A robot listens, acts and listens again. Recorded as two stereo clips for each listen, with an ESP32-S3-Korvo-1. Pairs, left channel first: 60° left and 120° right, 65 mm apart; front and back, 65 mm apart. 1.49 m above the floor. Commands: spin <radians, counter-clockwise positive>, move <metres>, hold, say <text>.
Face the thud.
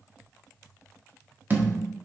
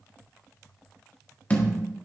spin -1.13
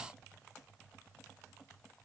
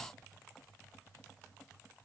say Facing where the thud came from. I can't hear it now.